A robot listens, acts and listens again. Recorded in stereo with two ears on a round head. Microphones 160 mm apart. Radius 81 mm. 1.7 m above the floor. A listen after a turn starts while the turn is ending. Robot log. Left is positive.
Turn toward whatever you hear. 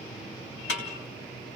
note: The snare drum: about 55° left or 125° left.
cmd yaw +55
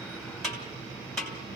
end: Facing the snare drum.